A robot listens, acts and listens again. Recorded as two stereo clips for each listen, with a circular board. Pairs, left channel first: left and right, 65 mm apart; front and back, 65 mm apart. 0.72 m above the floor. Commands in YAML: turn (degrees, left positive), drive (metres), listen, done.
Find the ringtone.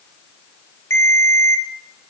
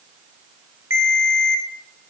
turn: 135
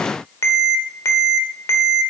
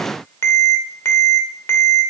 turn: 50
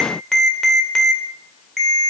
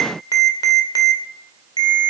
done: "Facing the ringtone."